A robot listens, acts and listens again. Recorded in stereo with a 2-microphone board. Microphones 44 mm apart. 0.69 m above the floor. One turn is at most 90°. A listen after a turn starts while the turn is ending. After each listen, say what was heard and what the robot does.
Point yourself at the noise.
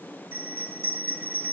The bell: about 55° right or 125° right. Turn 55° right.
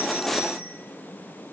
Keep listening.
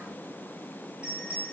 So it is at 25° right. Turn 25° right.
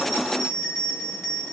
Found it: a bell, straight ahead, 1 to 2 m away.